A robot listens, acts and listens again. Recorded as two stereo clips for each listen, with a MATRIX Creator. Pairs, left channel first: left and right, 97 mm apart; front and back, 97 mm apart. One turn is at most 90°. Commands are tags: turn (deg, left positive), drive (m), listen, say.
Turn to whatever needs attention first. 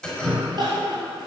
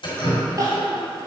<turn deg="-90"/>
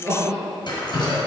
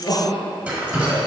<turn deg="-30"/>
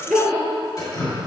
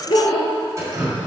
<say>Facing the crying, 1 to 2 m away.</say>